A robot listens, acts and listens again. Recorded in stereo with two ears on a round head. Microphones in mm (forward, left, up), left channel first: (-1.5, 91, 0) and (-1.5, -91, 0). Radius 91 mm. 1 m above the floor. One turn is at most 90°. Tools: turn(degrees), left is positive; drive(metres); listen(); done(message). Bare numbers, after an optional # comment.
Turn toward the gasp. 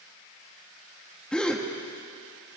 turn(30)
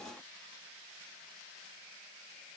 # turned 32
listen()
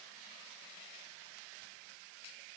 done("I heard a gasp, but can't make it out now. It was about 25° right or 145° left.")